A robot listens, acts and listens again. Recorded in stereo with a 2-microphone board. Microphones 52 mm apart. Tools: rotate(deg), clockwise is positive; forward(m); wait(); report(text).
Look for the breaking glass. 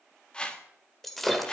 rotate(-30)
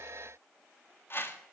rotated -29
wait()
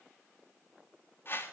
report("I heard breaking glass, but can't make it out now. It was about 25° right or 145° left.")